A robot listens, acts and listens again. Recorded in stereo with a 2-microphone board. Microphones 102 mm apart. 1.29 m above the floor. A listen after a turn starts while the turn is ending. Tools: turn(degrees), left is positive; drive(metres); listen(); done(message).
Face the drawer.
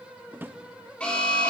turn(degrees=-20)
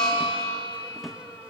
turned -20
done("Found it: a drawer, straight ahead, under 1 m away.")